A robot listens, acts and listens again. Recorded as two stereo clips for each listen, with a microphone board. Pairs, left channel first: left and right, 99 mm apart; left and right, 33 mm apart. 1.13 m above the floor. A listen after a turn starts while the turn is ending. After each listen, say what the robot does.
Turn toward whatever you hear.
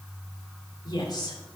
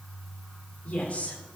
Turn 45° left.
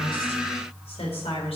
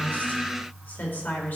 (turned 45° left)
Turn 100° left.
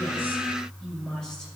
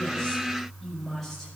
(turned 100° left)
Found it: a woman speaking, straight ahead.